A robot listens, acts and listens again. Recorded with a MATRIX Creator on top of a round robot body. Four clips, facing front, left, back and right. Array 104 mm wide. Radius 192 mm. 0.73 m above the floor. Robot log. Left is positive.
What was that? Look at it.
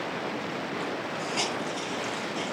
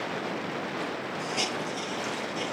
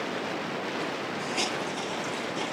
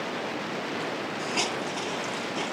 note: The hiss: 65° right.
cmd yaw -65
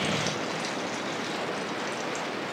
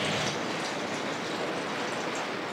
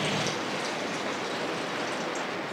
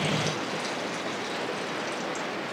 cmd idle
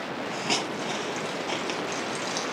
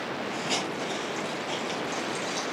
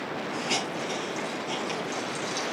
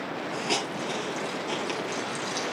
note: The hiss is now 25° right.
cmd yaw -25
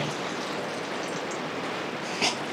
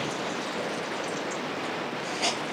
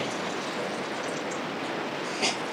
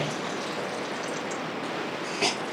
note: The hiss is now 35° right.
cmd yaw -35
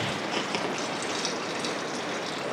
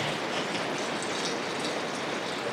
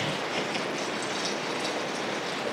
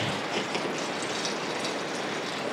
note: The hiss is now 15° right.
cmd yaw -15
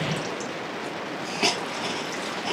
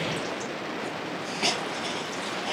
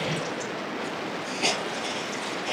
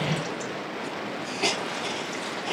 end: Found it: a hiss, straight ahead, 2 to 4 m away.